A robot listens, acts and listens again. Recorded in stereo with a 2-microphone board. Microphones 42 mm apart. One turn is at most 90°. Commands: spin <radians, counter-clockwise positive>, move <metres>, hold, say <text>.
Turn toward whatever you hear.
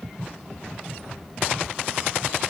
hold
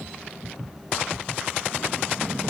hold
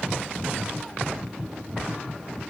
say I can't make out anything.